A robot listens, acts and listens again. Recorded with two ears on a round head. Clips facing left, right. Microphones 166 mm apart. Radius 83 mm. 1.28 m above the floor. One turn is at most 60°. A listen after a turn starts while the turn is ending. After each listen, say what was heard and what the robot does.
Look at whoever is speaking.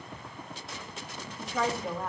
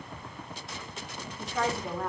Turn 30° left.
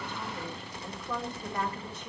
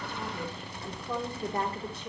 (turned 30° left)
So it is at 30° right. Turn 30° right.
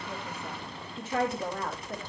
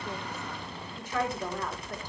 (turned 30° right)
The woman speaking is now 25° left. Turn 25° left.
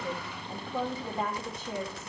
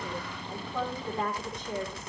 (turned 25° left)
Facing the woman speaking.